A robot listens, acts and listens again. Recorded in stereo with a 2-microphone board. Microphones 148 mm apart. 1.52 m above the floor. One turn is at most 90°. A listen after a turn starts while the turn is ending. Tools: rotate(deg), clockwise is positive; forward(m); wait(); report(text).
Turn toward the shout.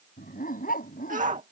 rotate(60)
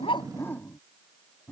wait()
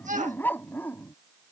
rotate(55)
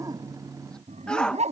report("Facing the shout.")